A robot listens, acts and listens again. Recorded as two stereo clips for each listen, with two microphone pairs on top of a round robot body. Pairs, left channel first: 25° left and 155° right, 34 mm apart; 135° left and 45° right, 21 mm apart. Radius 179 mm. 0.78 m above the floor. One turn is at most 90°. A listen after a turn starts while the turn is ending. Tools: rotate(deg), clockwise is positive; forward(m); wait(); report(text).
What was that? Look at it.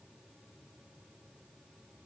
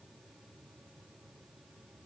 wait()
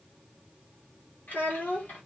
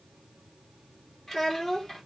rotate(-60)
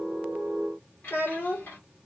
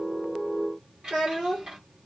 report("Facing the child speaking, 2 to 4 m away.")